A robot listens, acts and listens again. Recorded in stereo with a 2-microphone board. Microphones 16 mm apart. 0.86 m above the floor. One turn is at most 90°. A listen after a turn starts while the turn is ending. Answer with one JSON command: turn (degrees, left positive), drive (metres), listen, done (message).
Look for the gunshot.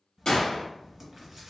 {"turn": 55}
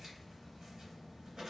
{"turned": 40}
{"listen": true}
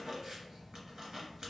{"done": "I heard a gunshot, but can't make it out now. It was about 15° left or 85° left."}